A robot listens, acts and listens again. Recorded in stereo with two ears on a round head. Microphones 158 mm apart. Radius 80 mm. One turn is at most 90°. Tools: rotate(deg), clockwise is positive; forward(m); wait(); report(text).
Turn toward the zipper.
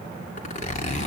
rotate(-45)
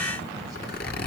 rotate(-85)
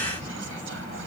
wait()
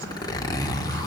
rotate(-25)
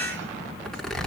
report("Facing the zipper, 2 to 4 m away.")